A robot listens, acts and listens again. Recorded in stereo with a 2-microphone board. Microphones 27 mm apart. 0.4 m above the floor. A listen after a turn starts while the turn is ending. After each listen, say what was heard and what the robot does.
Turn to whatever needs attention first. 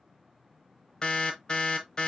The alarm: about 35° left or 145° left. Turn 35° left.
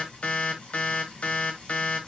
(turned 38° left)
So it is at 105° left. Turn 105° left.
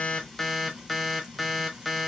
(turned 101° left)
Found it: an alarm, straight ahead.